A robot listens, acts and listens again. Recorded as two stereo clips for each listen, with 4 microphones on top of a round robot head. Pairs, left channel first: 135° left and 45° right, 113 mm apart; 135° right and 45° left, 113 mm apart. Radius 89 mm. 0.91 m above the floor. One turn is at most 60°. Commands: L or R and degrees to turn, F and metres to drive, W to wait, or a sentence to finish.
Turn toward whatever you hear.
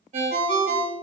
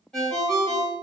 R55
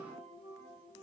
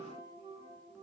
W
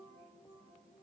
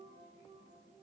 W
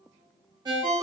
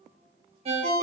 L10
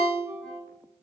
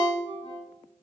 Facing the ringtone, 1 to 2 m away.